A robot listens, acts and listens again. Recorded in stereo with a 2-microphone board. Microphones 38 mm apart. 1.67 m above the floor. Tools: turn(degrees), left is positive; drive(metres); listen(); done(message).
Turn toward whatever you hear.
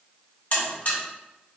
turn(degrees=50)
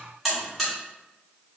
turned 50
done("Facing the buzzer, 2 to 4 m away.")